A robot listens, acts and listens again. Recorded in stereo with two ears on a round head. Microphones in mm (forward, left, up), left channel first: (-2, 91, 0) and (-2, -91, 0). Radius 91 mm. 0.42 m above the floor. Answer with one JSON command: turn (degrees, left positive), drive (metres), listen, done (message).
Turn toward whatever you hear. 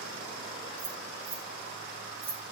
{"turn": -30}
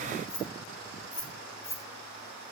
{"turn": 15}
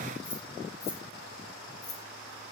{"turn": 20}
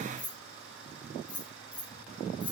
{"turn": 10}
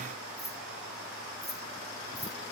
{"done": "Found it: keys jangling, straight ahead."}